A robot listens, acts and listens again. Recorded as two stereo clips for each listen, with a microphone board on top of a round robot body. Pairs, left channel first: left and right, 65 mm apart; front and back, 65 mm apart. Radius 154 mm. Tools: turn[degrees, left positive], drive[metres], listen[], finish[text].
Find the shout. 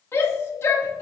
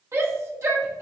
Thought: The shout: 140° left.
Action: turn[140]
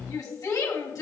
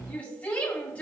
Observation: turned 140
Thought: The shout is now 70° left.
Action: turn[70]
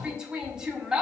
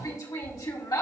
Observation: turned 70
Thought: The shout is now 10° right.
Action: turn[-10]
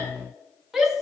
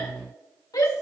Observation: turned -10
Action: finish[Found it: a shout, straight ahead, 2 to 4 m away.]